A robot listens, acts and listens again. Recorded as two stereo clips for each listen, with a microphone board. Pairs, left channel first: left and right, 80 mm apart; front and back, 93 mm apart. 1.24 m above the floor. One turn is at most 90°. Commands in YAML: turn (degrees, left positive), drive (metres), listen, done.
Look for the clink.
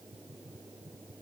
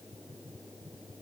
listen: true
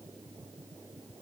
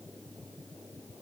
listen: true
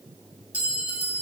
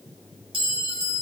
turn: -90
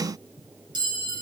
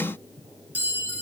turn: -90
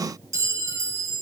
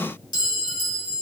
turn: -35
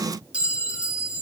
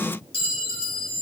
turn: -15
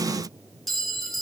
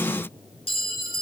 done: "Found it: a clink, straight ahead."